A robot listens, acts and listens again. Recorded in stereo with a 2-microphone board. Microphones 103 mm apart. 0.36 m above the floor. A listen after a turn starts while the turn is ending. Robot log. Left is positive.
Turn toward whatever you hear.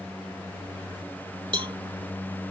note: The cowbell: about 50° right or 130° right.
cmd yaw -50
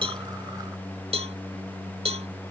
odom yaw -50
note: So it is at 75° right.
cmd yaw -75
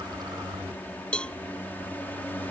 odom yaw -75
note: The cowbell is now 10° left.
cmd yaw +10
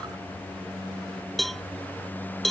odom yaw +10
end: Found it: a cowbell, straight ahead.